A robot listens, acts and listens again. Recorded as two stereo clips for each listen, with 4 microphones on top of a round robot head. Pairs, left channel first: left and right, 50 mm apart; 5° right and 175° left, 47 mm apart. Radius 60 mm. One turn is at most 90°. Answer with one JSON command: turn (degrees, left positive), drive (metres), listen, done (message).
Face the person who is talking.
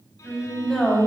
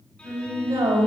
{"turn": 90}
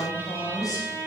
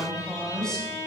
{"turn": 70}
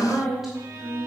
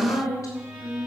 {"done": "Found it: a woman speaking, straight ahead, over 4 m away."}